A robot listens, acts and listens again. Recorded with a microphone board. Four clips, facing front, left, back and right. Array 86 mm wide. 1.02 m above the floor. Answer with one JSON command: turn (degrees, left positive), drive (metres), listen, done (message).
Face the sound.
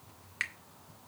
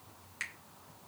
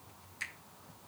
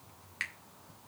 {"turn": -20}
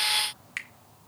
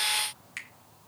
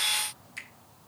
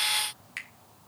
{"done": "Facing the finger snap, 2 to 4 m away."}